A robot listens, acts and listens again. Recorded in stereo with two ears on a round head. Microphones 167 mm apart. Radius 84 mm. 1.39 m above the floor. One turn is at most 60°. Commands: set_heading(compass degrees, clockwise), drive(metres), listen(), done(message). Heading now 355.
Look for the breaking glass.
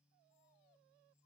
listen()
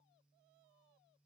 listen()
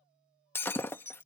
set_heading(325)
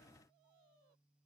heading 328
listen()
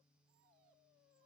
done("I heard breaking glass, but can't make it out now. It was about 15° right or 140° left.")